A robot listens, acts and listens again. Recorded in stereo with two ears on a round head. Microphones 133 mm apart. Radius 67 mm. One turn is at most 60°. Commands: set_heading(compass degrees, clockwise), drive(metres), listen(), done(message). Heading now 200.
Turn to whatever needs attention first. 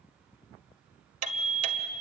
set_heading(160)
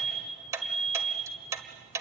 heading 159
done("Facing the alarm, over 4 m away.")